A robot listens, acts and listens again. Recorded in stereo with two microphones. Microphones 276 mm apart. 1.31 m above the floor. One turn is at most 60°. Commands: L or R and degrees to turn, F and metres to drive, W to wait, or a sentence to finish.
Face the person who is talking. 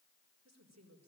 R60
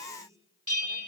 R10
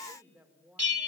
Found it: a woman speaking, straight ahead, over 4 m away.